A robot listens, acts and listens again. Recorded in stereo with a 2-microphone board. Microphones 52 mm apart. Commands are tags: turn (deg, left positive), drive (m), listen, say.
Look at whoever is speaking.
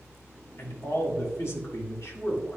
<turn deg="65"/>
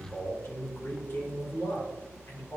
<turn deg="55"/>
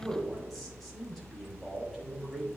<say>Facing the man speaking, 2 to 4 m away.</say>